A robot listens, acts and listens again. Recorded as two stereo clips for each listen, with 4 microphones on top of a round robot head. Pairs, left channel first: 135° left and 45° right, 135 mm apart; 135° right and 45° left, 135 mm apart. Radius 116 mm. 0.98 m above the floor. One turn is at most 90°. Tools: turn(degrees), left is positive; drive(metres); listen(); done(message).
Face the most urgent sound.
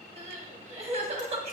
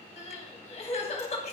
turn(degrees=-90)
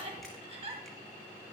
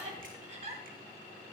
done("Found it: crying, straight ahead, 1 to 2 m away.")